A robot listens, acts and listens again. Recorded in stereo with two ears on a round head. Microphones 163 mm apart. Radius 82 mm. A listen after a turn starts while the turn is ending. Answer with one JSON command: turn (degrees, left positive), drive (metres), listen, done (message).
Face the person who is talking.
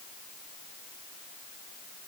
{"listen": true}
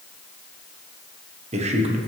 {"turn": -35}
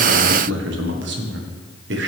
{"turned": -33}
{"turn": -110}
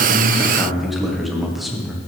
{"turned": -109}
{"done": "Found it: a man speaking, straight ahead, 1 to 2 m away."}